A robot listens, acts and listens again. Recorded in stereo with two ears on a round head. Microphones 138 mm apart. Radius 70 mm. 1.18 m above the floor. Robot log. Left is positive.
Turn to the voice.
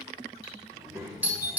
cmd yaw -30
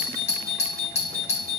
cmd idle
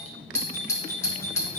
note: So it is at 145° right.
cmd yaw -145
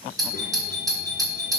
cmd idle
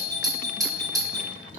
note: The child speaking is now 40° left.
cmd yaw +40
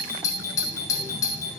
cmd idle
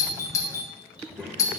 note: The child speaking is now 10° right.
cmd yaw -10
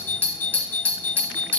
cmd idle
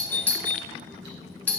end: Found it: a child speaking, straight ahead.